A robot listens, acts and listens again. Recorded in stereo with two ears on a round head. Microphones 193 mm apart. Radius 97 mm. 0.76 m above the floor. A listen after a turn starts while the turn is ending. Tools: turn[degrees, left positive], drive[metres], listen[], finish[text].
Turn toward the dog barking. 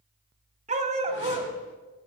Thought: The dog barking: about 30° right or 150° right.
Action: turn[-30]
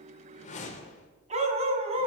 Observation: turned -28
Thought: The dog barking: about 30° right or 150° right.
Action: turn[-30]
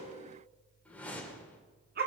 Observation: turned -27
Thought: So it is at 130° right.
Action: turn[-130]
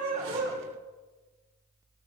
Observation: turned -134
Action: finish[Found it: a dog barking, straight ahead, 2 to 4 m away.]